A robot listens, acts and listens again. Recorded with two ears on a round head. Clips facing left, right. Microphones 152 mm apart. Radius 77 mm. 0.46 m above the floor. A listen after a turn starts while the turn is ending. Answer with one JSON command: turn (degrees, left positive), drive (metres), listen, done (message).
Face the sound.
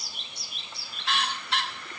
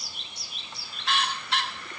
{"listen": true}
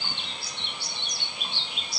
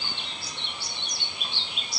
{"listen": true}
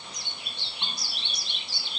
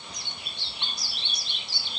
{"done": "I can't make out anything to turn to."}